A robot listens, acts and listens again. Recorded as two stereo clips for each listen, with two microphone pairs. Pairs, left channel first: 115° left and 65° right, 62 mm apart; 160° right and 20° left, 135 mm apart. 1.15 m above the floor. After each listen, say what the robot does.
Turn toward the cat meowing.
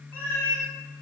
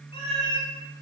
Turn 160° left.
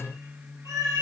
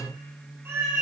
Turn 55° right.
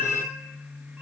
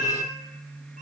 Found it: a cat meowing, straight ahead.